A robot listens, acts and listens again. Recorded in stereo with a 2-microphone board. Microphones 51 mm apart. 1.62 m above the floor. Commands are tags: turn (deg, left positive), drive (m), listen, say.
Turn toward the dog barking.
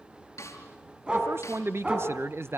<turn deg="-20"/>
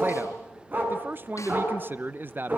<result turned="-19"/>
<turn deg="-40"/>
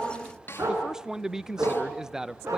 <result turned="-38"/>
<turn deg="-105"/>
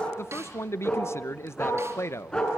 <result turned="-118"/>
<turn deg="15"/>
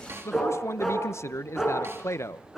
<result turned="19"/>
<say>Facing the dog barking.</say>